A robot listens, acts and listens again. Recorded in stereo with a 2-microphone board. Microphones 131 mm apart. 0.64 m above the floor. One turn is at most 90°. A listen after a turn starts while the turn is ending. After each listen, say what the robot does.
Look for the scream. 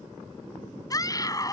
Turn 25° left.
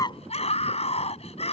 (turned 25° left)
Turn 90° left.
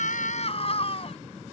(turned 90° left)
Turn 50° left.
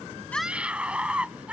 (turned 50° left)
Turn 10° right.
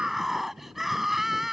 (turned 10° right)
Found it: a scream, straight ahead.